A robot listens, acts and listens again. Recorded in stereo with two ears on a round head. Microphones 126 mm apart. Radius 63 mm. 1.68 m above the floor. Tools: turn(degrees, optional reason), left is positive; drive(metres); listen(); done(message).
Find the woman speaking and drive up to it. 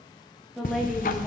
turn(degrees=-30)
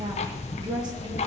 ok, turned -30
listen()
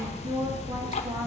listen()
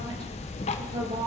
done("I heard a woman speaking, but can't make it out now. It was about 25° left or 145° right. I did not reach it.")